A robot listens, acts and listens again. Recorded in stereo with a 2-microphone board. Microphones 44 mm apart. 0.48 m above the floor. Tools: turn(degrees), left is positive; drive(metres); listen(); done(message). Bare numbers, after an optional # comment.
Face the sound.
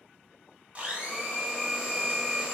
# The blender: about 30° right or 150° right.
turn(-30)
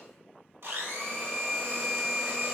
# So it is at 120° right.
turn(-120)
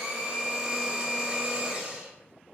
# The blender is now 25° right.
turn(-25)
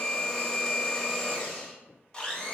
# The blender is now 20° left.
turn(20)
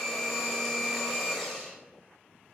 done("Found it: a blender, straight ahead, 1 to 2 m away.")